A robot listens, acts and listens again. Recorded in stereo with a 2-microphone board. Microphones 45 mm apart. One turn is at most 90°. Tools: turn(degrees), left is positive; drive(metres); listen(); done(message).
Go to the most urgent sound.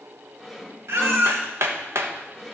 turn(degrees=-65)
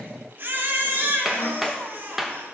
turn(degrees=-50)
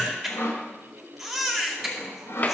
drive(metres=1.0)
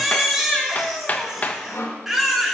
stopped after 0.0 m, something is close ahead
done("Blocked. The baby crying is further on, straight ahead.")